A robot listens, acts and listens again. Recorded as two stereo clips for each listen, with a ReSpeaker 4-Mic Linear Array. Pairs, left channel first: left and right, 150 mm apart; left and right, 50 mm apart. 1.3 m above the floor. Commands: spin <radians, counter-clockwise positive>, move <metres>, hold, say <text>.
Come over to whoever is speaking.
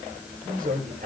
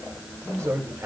spin -1.57
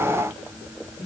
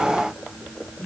spin 0.17
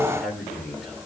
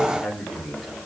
move 1.0
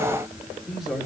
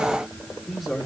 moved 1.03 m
move 1.0
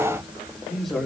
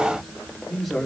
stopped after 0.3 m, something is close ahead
say Something is in my way. I am facing the man speaking but have not reached it.